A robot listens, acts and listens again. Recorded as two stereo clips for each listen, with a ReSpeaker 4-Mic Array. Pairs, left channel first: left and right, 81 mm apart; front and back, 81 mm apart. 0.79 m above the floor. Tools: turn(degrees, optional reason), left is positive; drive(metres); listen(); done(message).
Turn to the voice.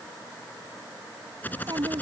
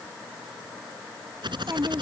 turn(degrees=-125, reason="The child speaking: 125° right.")
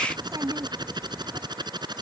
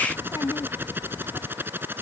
turn(degrees=-40, reason="The child speaking is now 40° right.")
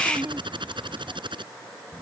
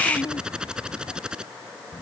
turn(degrees=-25, reason="The child speaking is now 25° right.")
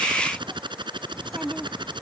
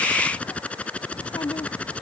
done("Facing the child speaking.")